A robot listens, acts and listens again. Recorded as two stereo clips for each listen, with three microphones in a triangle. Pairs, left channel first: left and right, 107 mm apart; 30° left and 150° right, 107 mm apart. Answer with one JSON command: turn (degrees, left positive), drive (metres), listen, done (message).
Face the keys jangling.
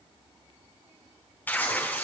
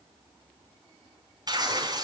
{"listen": true}
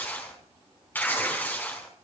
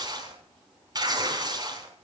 {"listen": true}
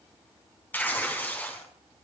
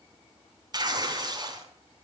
{"done": "I can't make out keys jangling, only tearing paper."}